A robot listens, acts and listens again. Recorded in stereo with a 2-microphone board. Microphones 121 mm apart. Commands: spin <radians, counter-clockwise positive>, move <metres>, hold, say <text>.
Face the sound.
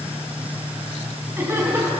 spin -0.35
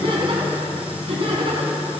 spin -2.27
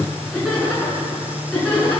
say Facing the laughter.